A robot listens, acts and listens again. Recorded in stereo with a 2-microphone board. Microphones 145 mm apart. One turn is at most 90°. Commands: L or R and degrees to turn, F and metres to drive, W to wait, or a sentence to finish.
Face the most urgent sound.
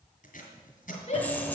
L50
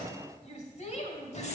L65
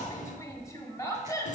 L25
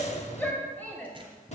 L15
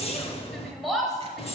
Facing the shout.